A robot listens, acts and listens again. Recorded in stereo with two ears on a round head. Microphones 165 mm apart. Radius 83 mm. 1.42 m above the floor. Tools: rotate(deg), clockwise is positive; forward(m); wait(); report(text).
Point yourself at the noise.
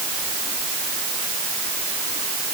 wait()
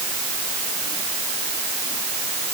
wait()
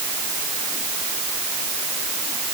report("I can't make out anything.")